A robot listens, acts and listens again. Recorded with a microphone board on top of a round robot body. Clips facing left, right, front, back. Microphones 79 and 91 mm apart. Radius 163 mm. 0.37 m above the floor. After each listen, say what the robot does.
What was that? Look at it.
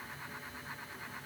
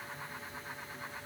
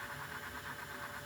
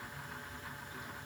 Keep listening.
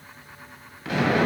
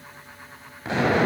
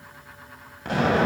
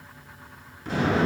Turn 25° right.
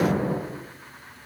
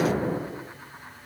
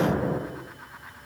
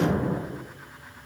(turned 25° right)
Facing the explosion, 2 to 4 m away.